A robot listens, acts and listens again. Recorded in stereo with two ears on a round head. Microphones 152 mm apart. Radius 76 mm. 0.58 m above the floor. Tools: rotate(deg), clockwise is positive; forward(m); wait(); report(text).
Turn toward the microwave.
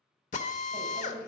rotate(30)
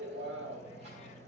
rotate(140)
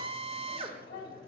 rotate(-25)
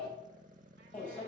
rotate(-10)
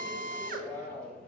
report("Found it: a microwave, straight ahead, 2 to 4 m away.")